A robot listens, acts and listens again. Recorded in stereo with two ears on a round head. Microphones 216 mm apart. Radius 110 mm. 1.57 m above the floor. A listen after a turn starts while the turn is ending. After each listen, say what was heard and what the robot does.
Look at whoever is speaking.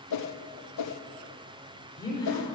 Turn 30° left.
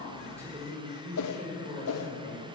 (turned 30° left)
So it is at 25° right. Turn 25° right.
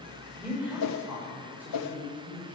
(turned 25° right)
The woman speaking is now 10° right. Turn 10° right.
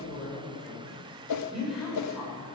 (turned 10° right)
Facing the woman speaking.